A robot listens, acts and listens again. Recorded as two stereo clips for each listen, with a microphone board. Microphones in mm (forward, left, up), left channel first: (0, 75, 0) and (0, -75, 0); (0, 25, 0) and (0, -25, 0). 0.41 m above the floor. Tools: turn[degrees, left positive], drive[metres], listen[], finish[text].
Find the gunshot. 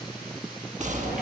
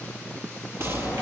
Thought: The gunshot: about 55° right or 125° right.
Action: turn[-55]
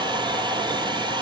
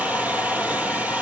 Action: listen[]
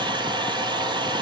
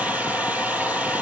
Action: finish[I heard a gunshot, but can't make it out now. It was about straight ahead or 70° right.]